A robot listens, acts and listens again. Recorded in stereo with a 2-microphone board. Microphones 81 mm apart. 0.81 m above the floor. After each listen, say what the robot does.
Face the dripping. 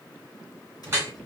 Turn 30° right.
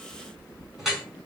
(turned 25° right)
Facing the dripping.